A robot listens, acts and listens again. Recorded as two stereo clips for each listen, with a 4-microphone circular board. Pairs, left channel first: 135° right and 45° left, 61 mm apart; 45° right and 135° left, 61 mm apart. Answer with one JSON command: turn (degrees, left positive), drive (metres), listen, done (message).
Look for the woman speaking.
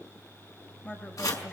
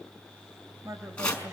{"turn": 150}
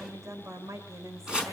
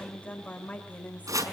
{"turn": 20}
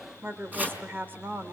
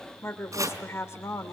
{"turn": -10}
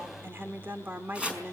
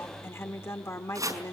{"turn": -10}
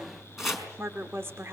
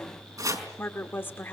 {"done": "Found it: a woman speaking, straight ahead, 1 to 2 m away."}